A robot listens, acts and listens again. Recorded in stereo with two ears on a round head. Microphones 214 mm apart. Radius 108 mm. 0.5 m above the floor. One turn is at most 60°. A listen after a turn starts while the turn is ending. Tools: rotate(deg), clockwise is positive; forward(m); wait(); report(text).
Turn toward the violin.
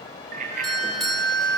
rotate(-45)
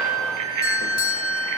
report("Found it: a violin, straight ahead, over 4 m away.")